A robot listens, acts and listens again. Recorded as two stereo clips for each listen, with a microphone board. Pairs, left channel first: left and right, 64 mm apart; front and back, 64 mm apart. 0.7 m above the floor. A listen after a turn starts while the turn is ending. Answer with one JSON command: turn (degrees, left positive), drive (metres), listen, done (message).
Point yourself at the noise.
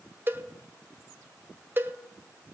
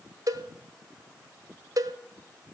{"turn": -150}
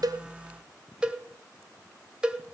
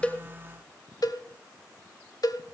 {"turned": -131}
{"turn": -15}
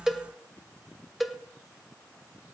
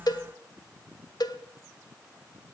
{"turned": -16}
{"done": "Facing the cowbell."}